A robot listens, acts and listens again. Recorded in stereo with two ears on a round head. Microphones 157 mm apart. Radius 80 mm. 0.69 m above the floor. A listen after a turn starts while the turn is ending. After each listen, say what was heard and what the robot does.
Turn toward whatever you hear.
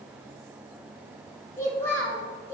Turn 30° left.
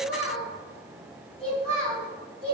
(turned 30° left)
So it is at 145° left. Turn 145° left.
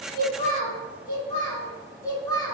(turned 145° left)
The child speaking is now 15° left. Turn 15° left.
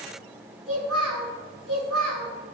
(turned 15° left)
Facing the child speaking.